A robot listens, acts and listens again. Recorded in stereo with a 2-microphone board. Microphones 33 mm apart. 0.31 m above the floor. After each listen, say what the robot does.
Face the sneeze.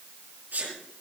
Turn 65° right.
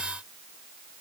Keep listening.
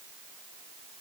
I heard a sneeze, but can't make it out now. It was about straight ahead or 50° right.